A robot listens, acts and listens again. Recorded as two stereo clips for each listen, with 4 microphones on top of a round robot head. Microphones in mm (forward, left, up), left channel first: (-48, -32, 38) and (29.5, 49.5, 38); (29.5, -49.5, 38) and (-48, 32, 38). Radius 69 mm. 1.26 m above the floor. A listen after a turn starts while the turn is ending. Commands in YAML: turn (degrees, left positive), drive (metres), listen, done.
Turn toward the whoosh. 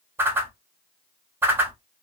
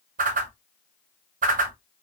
turn: 115
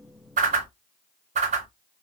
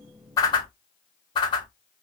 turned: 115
turn: 10
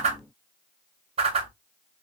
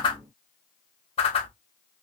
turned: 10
done: "Found it: a whoosh, straight ahead."